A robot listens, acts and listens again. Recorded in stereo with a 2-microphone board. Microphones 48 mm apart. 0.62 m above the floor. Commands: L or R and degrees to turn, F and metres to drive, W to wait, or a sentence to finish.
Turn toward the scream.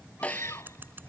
L90
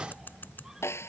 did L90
W
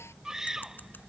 R10
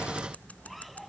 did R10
W
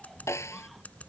W
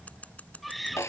Found it: a scream, straight ahead.